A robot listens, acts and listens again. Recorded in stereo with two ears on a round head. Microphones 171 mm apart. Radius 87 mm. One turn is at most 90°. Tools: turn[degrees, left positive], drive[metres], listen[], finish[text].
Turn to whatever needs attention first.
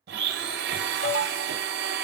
Thought: The alarm: about 65° left or 115° left.
Action: turn[65]
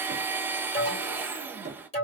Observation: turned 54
Thought: So it is at 35° left.
Action: turn[35]
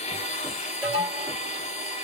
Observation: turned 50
Thought: The alarm is now 15° right.
Action: turn[-15]
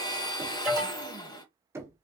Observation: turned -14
Action: finish[Facing the alarm.]